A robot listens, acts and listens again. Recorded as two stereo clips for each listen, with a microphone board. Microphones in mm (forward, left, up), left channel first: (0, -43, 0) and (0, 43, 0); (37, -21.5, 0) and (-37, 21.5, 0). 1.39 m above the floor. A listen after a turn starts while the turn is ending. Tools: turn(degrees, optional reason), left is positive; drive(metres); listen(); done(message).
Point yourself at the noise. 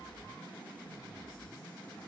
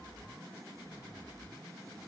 listen()
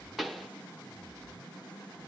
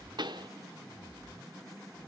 turn(degrees=180, reason="The pop: straight behind.")
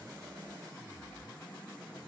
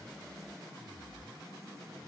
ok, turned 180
done("Facing where the pop came from. I can't hear it now.")